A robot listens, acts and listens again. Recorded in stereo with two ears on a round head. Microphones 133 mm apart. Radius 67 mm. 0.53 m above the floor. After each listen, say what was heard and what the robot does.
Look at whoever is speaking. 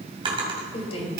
The woman speaking: about 40° left or 140° left. Turn 40° left.
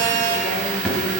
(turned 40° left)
Keep listening.
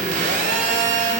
Keep listening.
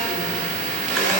I heard a woman speaking, but can't make it out now. It was about straight ahead or 100° left.